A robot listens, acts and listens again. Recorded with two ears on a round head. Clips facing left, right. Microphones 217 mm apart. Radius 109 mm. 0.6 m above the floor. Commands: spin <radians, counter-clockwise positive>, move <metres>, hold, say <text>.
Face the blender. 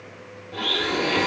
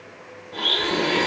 spin 0.52
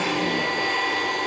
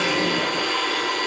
spin -0.35
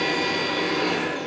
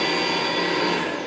say Found it: a blender, straight ahead, 1 to 2 m away.